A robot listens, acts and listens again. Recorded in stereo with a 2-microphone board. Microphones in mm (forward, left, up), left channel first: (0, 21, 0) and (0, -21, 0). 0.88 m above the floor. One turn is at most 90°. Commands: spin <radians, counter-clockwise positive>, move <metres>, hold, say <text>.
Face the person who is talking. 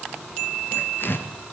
hold
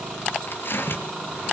hold
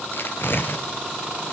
say I can't make out anyone speaking, only tearing paper.